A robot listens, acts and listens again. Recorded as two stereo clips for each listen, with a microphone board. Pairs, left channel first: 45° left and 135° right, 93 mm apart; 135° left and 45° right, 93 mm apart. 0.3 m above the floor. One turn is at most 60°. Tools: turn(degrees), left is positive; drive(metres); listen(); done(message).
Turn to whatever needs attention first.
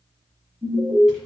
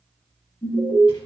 turn(degrees=-60)
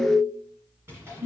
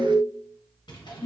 turn(degrees=-60)
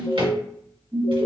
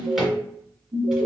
turn(degrees=-60)
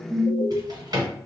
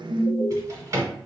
turn(degrees=-35)
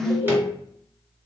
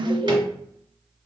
turn(degrees=-10)
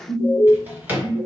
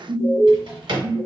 done("Facing the alarm.")